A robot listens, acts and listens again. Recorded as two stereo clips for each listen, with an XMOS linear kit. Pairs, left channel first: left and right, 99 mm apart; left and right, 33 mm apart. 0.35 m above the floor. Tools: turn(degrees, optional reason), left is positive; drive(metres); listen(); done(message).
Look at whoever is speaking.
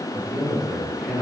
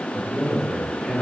turn(degrees=30)
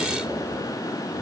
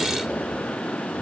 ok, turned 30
listen()
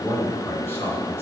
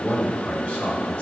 turn(degrees=155, reason="So it is at 155° left.")
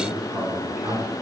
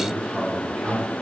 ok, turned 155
turn(degrees=-15, reason="The man speaking is now 15° right.")
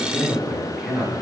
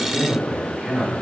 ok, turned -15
done("Facing the man speaking.")